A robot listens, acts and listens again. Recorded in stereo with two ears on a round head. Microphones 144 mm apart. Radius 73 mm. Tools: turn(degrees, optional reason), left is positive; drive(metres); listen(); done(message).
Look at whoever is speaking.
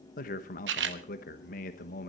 turn(degrees=55, reason="The man speaking: about 55° left or 125° left.")
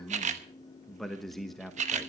done("Found it: a man speaking, straight ahead.")